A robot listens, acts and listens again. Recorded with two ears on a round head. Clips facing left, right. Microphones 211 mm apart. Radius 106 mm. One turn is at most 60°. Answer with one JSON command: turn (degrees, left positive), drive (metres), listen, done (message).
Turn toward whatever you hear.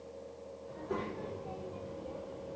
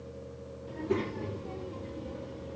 {"turn": -30}
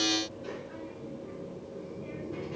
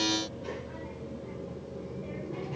{"turn": 20}
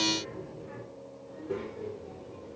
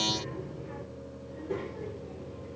{"turn": 10}
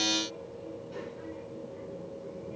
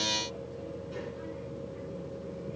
{"done": "Facing the child speaking."}